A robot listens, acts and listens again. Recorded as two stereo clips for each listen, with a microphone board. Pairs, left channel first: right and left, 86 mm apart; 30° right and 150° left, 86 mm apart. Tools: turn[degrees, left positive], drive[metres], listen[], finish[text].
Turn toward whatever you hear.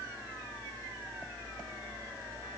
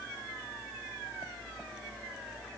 Action: listen[]
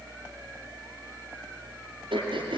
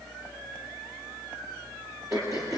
Thought: The throat clearing: 100° left.
Action: turn[100]
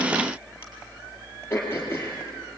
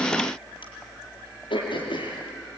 Thought: The throat clearing is now 25° right.
Action: turn[-25]
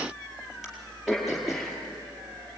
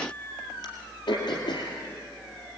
Action: finish[Facing the throat clearing, over 4 m away.]